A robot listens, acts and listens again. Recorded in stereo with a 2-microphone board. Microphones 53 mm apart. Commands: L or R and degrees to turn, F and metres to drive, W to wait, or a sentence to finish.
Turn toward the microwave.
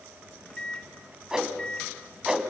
L20
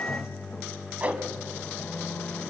L140
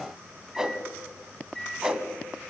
Facing the microwave.